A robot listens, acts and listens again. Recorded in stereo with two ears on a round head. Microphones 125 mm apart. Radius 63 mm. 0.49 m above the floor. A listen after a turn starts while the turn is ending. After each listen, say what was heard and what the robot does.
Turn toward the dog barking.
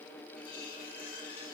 Keep listening.
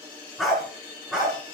Turn 30° right.
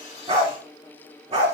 So it is at 135° right. Turn 135° right.
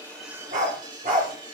The dog barking is now 55° right. Turn 55° right.
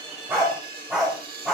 Found it: a dog barking, straight ahead, over 4 m away.